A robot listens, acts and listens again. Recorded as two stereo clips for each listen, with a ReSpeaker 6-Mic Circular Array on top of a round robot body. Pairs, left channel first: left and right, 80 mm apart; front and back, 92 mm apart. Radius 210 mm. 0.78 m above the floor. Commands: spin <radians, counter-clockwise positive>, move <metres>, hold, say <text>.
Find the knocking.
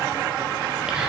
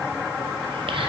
hold
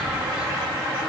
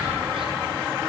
hold
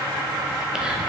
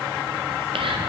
say I can't make out knocking.